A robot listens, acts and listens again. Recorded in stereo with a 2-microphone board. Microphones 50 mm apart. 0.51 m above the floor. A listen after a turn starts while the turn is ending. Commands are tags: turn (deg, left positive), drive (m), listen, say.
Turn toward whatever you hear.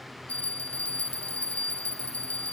<turn deg="30"/>
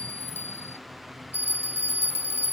<turn deg="120"/>
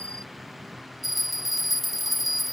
<say>Facing the bell.</say>